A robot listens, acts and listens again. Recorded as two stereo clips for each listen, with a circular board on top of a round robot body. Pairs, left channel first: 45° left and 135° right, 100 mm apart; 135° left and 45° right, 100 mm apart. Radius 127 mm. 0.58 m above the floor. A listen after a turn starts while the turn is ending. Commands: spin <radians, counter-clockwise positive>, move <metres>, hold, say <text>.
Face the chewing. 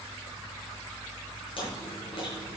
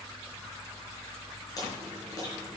spin 1.40
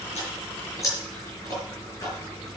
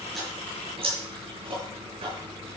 spin -0.26
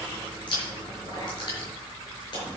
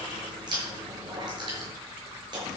say Found it: chewing, straight ahead, over 4 m away.